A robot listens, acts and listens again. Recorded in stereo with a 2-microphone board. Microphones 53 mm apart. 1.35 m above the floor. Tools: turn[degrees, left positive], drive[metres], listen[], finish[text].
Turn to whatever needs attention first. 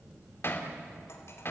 Action: listen[]
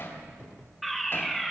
Action: turn[30]
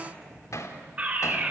Thought: So it is at 30° right.
Action: turn[-30]
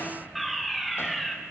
Action: finish[Found it: a fire alarm, straight ahead, 2 to 4 m away.]